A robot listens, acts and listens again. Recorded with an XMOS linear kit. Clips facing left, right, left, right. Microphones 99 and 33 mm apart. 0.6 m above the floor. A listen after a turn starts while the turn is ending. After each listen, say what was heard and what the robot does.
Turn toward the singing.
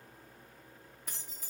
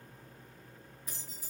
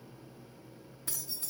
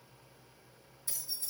Keep listening.
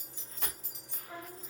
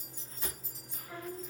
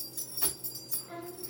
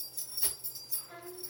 The singing: about 20° left or 160° left. Turn 20° left.
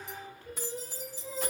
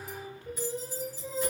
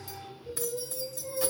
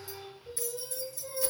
So it is at 20° right. Turn 20° right.
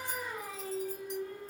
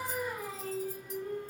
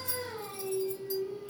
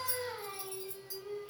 The singing is now 20° right. Turn 20° right.
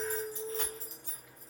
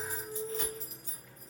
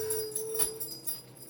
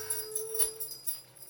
Found it: singing, straight ahead, 1 to 2 m away.